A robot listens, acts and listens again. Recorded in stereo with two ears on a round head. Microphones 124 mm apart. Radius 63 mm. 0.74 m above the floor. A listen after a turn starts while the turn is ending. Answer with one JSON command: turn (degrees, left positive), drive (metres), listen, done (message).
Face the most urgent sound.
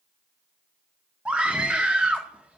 {"turn": -30}
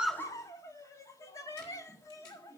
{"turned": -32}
{"turn": 25}
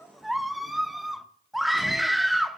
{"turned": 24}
{"done": "Facing the scream."}